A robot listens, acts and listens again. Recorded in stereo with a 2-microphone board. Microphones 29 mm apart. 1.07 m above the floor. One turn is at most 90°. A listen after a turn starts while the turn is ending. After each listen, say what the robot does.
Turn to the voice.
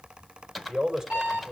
Turn 30° right.
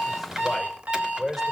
Found it: a man speaking, straight ahead.